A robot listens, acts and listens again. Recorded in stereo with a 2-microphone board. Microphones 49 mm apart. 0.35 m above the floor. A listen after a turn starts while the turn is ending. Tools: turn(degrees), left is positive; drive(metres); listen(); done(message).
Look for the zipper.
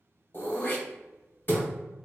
listen()
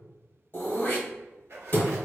turn(degrees=-60)
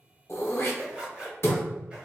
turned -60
turn(degrees=-30)
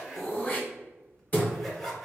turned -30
done("Facing the zipper, under 1 m away.")